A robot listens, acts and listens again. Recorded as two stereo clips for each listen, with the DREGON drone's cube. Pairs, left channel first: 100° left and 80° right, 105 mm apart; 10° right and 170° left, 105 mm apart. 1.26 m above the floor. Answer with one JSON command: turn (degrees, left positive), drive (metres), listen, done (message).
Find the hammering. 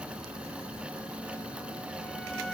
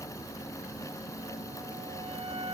{"listen": true}
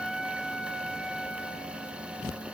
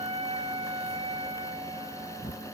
{"listen": true}
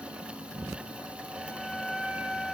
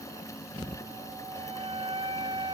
{"done": "I can't make out hammering to turn to."}